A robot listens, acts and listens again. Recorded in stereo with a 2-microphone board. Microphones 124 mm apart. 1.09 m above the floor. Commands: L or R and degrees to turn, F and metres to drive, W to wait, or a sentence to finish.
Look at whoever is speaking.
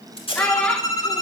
L30
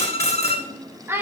R20
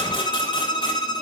W
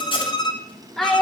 Facing the child speaking, 1 to 2 m away.